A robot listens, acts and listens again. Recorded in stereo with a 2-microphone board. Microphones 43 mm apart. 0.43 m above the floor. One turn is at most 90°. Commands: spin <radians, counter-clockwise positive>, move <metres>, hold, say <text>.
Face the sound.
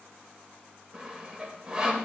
spin -0.35
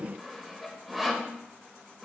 say Facing the sawing, under 1 m away.